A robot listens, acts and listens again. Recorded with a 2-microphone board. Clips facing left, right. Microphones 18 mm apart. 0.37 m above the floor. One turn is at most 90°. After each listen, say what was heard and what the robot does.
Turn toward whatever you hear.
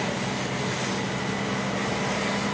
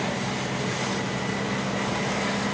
Keep listening.
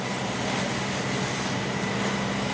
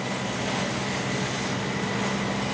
Keep listening.
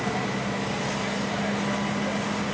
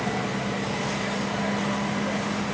I can't make out anything to turn to.